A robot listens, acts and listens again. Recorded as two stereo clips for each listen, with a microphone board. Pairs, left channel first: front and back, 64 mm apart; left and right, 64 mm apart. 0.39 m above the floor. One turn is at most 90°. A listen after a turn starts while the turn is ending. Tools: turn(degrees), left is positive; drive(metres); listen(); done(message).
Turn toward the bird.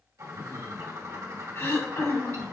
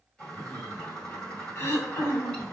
turn(degrees=90)
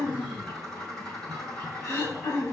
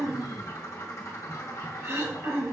turn(degrees=85)
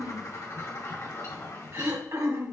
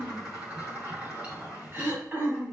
turn(degrees=-20)
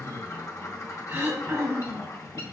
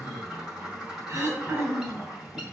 done("Facing the bird.")